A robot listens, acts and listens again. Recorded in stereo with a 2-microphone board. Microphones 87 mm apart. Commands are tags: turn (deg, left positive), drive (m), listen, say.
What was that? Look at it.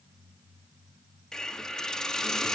<turn deg="30"/>
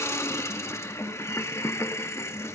<turn deg="145"/>
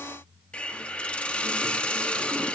<turn deg="15"/>
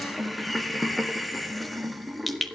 <say>Found it: a hiss, straight ahead, 1 to 2 m away.</say>